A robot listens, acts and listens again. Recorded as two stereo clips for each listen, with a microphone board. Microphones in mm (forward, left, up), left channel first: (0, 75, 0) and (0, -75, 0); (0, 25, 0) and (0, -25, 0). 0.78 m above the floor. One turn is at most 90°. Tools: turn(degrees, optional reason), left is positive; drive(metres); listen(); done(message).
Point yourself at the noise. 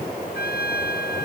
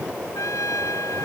turn(degrees=90)
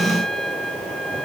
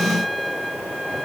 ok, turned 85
done("Found it: a trumpet, straight ahead.")